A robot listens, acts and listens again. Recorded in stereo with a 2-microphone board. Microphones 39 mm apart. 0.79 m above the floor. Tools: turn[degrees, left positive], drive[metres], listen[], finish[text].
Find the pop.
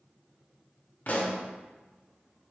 Thought: The pop: about 40° left or 140° left.
Action: turn[40]
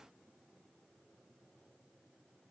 Action: listen[]
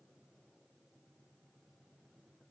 Action: finish[I heard a pop, but can't make it out now. It was about straight ahead or 100° left.]